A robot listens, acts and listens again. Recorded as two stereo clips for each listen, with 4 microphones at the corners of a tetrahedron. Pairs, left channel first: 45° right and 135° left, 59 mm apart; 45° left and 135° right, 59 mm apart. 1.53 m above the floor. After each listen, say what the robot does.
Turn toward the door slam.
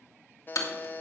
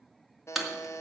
Turn 45° right.
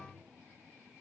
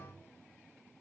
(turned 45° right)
Facing where the door slam came from. I can't hear it now.